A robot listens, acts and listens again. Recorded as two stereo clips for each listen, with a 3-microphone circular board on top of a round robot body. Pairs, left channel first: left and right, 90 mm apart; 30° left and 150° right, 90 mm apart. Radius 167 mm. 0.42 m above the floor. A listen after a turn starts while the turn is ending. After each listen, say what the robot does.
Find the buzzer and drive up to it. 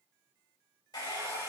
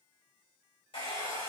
Keep listening.
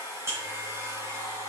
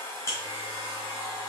Turn 30° right.
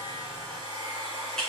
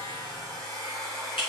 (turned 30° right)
Drive 1.0 m forward.
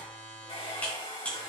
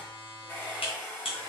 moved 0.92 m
Turn 15° left.
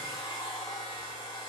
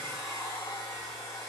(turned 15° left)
Keep listening.
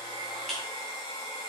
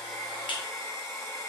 Drive 1.0 m forward.
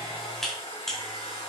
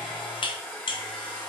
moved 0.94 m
Drive 1.0 m forward.
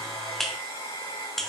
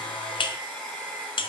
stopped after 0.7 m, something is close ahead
Arrived at the buzzer, straight ahead.